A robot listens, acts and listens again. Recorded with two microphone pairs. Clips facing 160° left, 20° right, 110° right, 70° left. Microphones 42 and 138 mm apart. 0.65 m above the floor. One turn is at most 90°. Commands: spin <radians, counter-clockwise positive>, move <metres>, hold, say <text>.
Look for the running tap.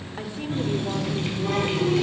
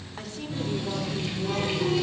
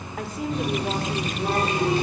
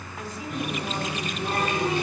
spin -1.57
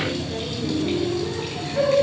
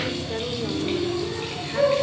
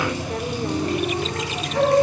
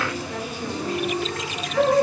spin -1.57
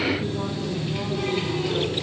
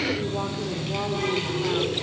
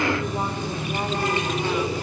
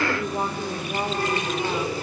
spin -0.70
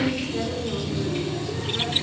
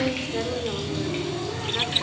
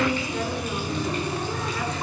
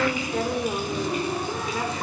spin -0.17
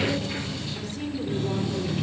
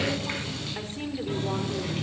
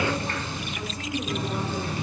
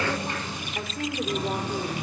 say Found it: a running tap, straight ahead, 2 to 4 m away.